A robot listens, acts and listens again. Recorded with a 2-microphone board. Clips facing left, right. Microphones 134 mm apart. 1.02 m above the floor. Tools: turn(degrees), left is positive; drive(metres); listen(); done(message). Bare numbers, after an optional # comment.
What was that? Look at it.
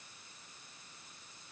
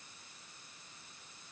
listen()
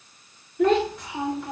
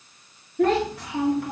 # The child speaking: about 70° right or 110° right.
turn(-70)
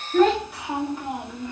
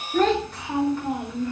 # So it is at 20° left.
turn(20)
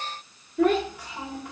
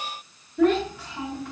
# The child speaking is now 15° left.
turn(15)
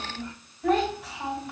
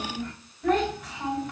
done("Facing the child speaking.")